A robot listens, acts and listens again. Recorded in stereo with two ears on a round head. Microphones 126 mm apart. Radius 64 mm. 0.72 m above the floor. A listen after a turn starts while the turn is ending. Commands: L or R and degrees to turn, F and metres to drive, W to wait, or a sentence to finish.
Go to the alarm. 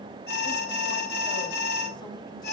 L90
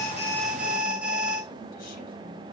R10
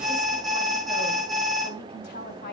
F1.0
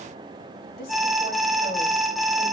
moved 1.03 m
F1.0
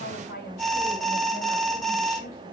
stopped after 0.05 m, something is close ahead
Arrived at the alarm, straight ahead.